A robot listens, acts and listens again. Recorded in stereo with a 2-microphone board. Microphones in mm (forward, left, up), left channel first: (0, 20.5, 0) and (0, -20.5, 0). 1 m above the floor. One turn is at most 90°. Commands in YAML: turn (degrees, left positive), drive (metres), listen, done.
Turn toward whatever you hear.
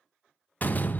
turn: 40
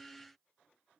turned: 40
listen: true
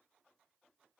done: "I heard a door slam, but can't make it out now. It was about straight ahead or 100° left."